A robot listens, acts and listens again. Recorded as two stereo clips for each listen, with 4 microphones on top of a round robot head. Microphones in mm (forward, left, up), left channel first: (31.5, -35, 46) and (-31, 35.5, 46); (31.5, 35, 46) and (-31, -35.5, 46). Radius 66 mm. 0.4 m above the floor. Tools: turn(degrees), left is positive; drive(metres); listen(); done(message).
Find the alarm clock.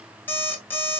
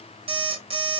turn(degrees=-120)
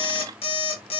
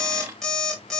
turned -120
turn(degrees=-35)
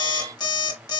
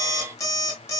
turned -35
done("Facing the alarm clock, 1 to 2 m away.")